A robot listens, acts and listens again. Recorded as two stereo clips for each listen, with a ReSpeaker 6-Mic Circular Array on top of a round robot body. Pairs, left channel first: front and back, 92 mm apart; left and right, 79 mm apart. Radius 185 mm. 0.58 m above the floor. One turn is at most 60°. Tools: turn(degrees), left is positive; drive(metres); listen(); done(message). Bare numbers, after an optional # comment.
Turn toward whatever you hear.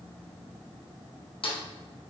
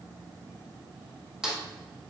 done("Facing the snare drum, 2 to 4 m away.")